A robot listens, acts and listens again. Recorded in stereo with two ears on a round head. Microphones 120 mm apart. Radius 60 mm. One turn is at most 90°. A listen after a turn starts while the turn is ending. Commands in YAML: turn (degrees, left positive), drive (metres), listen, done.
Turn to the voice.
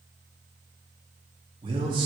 turn: -35
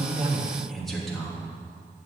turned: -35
done: "Facing the man speaking."